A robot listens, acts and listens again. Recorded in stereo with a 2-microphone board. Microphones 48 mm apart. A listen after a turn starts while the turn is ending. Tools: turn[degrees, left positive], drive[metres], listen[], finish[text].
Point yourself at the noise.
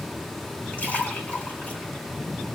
Thought: The splash: about 35° left or 145° left.
Action: turn[35]
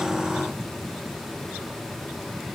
Action: listen[]
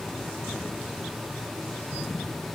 Action: finish[I heard a splash, but can't make it out now. It was about straight ahead or 110° left.]